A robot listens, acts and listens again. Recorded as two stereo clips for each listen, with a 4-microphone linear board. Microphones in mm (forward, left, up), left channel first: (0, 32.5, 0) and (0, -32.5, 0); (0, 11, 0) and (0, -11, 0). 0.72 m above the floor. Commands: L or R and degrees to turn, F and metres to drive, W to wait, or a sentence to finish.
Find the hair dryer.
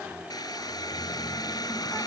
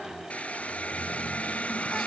L90
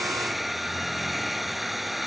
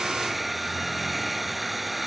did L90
Found it: a hair dryer, straight ahead.